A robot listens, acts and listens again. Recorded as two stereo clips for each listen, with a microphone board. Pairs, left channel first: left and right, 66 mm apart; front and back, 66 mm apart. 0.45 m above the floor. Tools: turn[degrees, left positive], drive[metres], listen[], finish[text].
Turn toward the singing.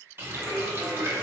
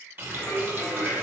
Thought: The singing: 55° right.
Action: turn[-55]
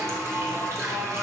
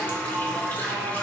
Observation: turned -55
Thought: The singing is now 10° right.
Action: turn[-10]
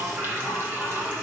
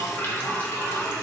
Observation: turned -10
Thought: The singing is now 10° right.
Action: turn[-10]
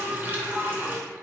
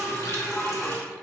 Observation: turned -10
Action: finish[Facing the singing.]